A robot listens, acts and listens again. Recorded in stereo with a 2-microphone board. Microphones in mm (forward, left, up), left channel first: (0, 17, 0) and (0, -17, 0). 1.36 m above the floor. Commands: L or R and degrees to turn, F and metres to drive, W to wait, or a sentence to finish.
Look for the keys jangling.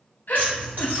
R65
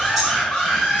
W
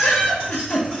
W
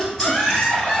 I heard keys jangling, but can't make it out now. It was about straight ahead or 50° right.